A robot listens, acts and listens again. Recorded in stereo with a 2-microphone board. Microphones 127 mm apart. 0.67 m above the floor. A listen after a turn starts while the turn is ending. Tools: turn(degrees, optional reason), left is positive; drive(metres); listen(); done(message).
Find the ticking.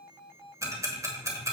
turn(degrees=-25, reason="The ticking: about 25° right or 155° right.")
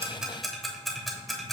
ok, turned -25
done("Facing the ticking.")